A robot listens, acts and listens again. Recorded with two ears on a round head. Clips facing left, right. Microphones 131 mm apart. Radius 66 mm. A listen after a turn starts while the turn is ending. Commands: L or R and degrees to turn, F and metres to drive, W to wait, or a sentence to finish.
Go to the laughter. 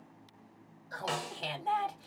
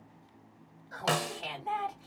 L40
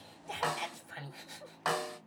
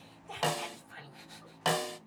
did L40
L100
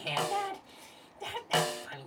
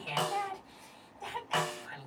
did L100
L30
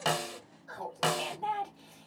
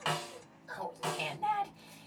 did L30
R15
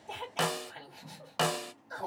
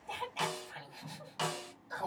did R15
F1.0
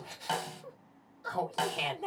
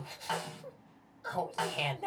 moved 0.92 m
F1.0
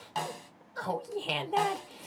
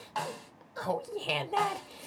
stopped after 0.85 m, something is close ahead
I am next to the laughter.